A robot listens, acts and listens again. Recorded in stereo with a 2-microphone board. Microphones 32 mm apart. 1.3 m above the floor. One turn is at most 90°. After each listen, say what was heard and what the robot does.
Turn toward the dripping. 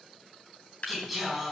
The dripping: about 50° left or 130° left. Turn 50° left.
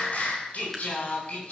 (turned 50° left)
Keep listening.
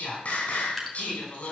Found it: dripping, straight ahead.